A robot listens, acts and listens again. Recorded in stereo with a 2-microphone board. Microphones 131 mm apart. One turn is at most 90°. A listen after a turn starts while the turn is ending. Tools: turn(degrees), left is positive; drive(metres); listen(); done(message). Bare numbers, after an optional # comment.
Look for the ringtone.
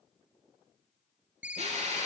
turn(-30)
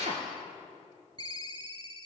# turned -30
# So it is at 140° right.
turn(-90)
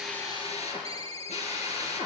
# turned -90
# The ringtone is now 55° right.
turn(-55)
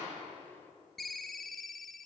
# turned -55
done("Facing the ringtone, under 1 m away.")